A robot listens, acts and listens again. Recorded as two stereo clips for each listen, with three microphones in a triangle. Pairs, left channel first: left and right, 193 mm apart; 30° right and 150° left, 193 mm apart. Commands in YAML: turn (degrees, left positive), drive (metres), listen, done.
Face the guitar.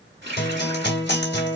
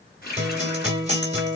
turn: 100
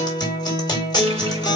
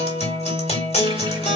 turn: 20
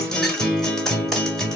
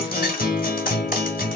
done: "Facing the guitar."